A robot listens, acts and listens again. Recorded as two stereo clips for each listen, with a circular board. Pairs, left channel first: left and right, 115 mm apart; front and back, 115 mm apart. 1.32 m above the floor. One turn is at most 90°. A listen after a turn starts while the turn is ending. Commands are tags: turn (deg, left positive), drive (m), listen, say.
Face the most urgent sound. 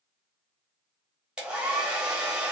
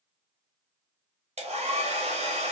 <listen/>
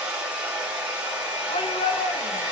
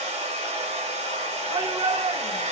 <turn deg="90"/>
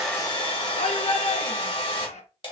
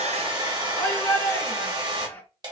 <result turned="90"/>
<turn deg="75"/>
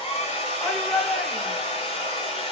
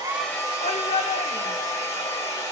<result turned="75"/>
<say>Facing the shout.</say>